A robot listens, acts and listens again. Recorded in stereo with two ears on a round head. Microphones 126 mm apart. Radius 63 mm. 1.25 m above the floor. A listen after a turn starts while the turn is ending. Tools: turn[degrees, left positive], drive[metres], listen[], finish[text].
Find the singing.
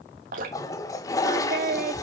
Thought: The singing: about 65° right or 115° right.
Action: turn[-65]
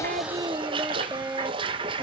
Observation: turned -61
Thought: So it is at 20° right.
Action: turn[-20]
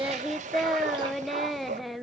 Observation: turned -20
Action: finish[Facing the singing, under 1 m away.]